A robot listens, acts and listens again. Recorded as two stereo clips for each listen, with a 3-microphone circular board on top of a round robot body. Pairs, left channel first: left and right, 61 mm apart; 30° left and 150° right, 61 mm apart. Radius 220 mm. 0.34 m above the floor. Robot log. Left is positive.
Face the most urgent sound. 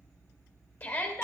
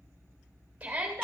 note: The shout: 140° left.
cmd yaw +140
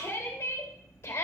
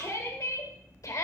note: The shout is now 45° left.
cmd yaw +45
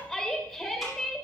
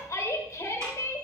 end: Found it: a shout, straight ahead, 2 to 4 m away.